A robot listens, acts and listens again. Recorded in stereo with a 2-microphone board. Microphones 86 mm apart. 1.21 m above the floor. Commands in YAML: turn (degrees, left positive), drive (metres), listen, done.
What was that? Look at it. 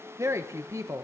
turn: -35
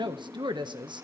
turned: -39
turn: -105
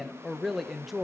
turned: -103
done: "Found it: a woman speaking, straight ahead, 1 to 2 m away."